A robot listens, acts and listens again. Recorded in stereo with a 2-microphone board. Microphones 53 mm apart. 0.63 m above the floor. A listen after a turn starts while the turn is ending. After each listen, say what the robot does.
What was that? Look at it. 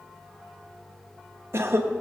Turn 55° right.
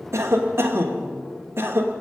Turn 60° right.
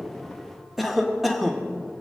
Found it: a cough, straight ahead, 1 to 2 m away.